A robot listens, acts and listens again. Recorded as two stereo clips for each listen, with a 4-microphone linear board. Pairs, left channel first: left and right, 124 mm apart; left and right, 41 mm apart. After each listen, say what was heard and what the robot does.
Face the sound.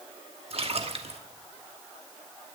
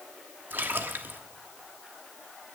The splash: about 55° right or 125° right. Turn 55° right.
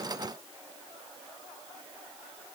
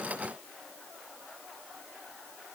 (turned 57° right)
Keep listening.
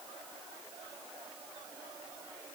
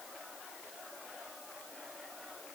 I heard a splash, but can't make it out now. It was about 5° left or 70° right.